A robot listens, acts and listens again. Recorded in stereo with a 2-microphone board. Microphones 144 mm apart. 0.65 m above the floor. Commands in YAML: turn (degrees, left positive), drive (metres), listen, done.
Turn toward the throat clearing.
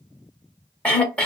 turn: 30
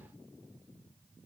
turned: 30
listen: true
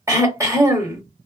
turn: -20
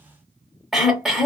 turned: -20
done: "Found it: throat clearing, straight ahead."